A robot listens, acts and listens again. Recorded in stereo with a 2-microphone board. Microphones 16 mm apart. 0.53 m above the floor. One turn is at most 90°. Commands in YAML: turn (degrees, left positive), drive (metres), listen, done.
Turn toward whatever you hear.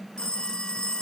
turn: 60
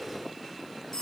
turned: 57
turn: 55
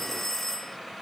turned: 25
turn: 30
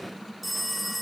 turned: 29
done: "Facing the phone ringing."